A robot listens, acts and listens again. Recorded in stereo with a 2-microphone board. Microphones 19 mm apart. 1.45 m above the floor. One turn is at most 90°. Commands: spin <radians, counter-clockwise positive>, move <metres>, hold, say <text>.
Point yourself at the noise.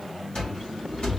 spin 0.96
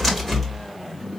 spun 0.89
spin 0.17
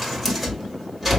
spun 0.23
say Facing the cupboard door, 2 to 4 m away.